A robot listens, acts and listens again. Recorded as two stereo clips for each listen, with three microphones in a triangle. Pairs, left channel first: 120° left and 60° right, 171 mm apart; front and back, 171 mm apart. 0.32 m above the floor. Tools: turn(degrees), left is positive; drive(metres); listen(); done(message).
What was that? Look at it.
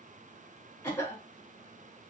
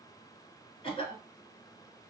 turn(degrees=50)
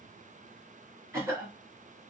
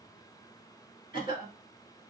done("Facing the cough.")